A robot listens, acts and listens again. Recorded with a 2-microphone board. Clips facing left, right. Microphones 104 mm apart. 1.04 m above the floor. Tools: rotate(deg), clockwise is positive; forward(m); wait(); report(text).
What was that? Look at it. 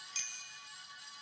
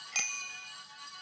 rotate(70)
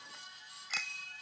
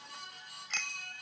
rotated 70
report("Found it: a bicycle bell, straight ahead.")